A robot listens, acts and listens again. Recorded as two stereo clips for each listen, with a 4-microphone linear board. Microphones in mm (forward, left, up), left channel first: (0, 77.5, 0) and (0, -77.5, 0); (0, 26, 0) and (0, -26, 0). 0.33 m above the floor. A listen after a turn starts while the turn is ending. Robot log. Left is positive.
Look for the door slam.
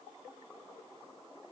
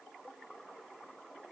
cmd idle
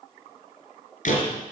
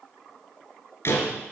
note: The door slam: about 55° left or 125° left.
cmd yaw +55
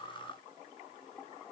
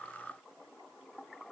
cmd idle
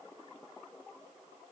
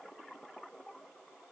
end: I heard a door slam, but can't make it out now. It was about straight ahead or 70° left.